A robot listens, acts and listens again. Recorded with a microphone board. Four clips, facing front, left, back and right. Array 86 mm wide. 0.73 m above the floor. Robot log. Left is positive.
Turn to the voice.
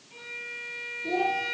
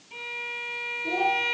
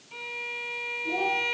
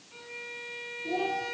note: The child speaking: 35° left.
cmd yaw +35
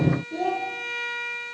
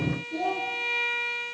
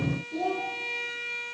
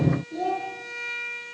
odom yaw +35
end: Found it: a child speaking, straight ahead.